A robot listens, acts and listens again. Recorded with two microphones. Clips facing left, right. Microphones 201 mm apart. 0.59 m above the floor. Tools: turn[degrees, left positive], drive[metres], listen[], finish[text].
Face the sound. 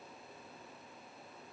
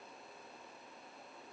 Action: listen[]
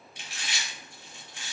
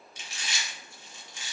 Thought: The chewing: about 60° left or 120° left.
Action: turn[60]
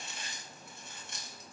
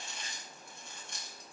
Action: finish[Facing the chewing, 1 to 2 m away.]